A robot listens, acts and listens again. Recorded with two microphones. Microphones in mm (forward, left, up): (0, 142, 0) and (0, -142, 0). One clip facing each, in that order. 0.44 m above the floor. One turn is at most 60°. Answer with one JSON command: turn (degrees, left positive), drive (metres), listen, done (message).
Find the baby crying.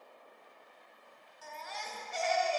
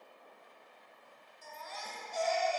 {"turn": 60}
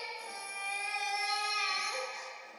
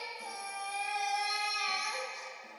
{"turn": 30}
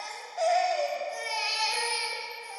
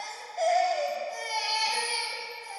{"done": "Facing the baby crying, under 1 m away."}